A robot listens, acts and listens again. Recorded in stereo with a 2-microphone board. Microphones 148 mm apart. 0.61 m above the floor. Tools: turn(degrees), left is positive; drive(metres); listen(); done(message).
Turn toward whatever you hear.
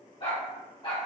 turn(degrees=40)
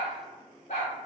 turn(degrees=115)
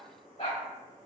turn(degrees=45)
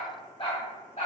turn(degrees=50)
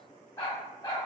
turn(degrees=30)
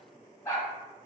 turn(degrees=20)
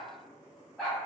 done("Facing the dog barking.")